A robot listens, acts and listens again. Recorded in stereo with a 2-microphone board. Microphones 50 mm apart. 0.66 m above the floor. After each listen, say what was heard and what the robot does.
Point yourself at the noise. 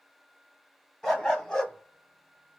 The dog barking: about 20° left or 160° left. Turn 20° left.
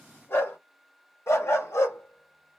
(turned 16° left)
So it is at 110° left. Turn 110° left.
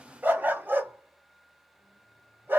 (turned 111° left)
The dog barking is now 40° right. Turn 40° right.
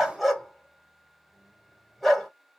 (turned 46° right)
Found it: a dog barking, straight ahead, 1 to 2 m away.